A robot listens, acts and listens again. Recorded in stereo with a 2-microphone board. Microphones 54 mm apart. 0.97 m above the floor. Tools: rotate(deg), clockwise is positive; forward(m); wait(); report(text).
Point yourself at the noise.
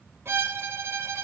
rotate(45)
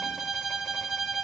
report("Facing the violin, under 1 m away.")